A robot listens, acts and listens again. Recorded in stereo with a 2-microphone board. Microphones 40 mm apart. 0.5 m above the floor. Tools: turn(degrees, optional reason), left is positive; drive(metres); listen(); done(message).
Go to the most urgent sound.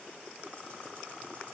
listen()
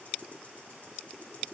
listen()
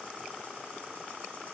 done("I can't make out anything urgent.")